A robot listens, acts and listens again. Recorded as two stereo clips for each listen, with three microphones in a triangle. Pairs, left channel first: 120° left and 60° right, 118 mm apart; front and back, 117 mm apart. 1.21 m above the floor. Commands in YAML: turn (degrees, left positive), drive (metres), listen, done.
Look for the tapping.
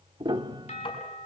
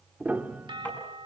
turn: 75
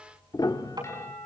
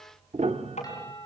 done: "Facing the tapping, over 4 m away."